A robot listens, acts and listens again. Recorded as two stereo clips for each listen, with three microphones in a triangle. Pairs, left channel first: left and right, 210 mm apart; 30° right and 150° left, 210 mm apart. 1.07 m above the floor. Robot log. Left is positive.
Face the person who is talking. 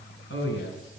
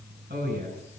note: The man speaking: 110° left.
cmd yaw +110
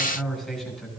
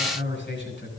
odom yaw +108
end: Facing the man speaking.